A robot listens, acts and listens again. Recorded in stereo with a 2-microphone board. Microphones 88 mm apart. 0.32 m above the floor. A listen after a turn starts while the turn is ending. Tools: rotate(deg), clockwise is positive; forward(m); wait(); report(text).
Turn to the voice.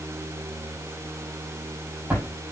wait()
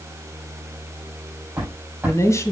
rotate(-35)
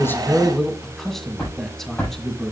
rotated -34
report("Facing the man speaking.")